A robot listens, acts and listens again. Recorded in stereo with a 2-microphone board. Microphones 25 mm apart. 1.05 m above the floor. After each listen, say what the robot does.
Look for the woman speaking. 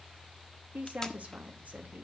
Turn 90° right.
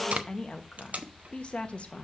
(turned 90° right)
Turn 50° left.
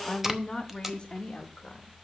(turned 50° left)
Turn 35° left.
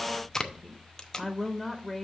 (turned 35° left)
Facing the woman speaking.